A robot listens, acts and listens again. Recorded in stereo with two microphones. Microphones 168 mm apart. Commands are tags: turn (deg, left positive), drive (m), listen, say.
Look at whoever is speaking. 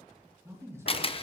<turn deg="-15"/>
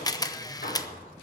<listen/>
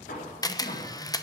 <listen/>
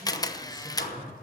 <turn deg="-150"/>
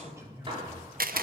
<turn deg="-20"/>
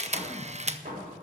<listen/>
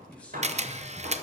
<say>Found it: a man speaking, straight ahead, 2 to 4 m away.</say>